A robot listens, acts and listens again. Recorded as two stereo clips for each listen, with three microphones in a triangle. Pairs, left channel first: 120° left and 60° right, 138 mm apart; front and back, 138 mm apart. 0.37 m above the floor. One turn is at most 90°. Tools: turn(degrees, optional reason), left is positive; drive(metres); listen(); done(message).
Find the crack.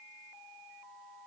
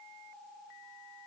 listen()
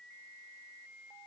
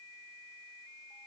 listen()
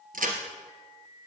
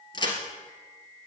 turn(degrees=-55, reason="The crack: 55° right.")
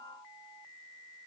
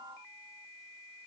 done("Facing where the crack came from. I can't hear it now.")